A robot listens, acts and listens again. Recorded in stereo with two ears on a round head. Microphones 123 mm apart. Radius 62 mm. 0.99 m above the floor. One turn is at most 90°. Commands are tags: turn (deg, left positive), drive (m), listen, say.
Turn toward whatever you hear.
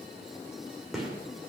<turn deg="30"/>
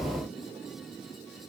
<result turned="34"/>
<listen/>
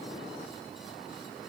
<say>I heard a gunshot, but can't make it out now. It was about 35° right or 150° left.</say>